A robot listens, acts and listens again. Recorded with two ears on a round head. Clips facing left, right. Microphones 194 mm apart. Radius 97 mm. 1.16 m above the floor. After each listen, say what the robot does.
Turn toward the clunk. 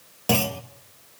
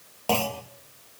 Turn 20° left.
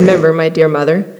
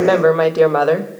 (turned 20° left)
Keep listening.
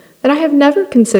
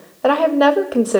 I heard a clunk, but can't make it out now. It was about straight ahead or 140° left.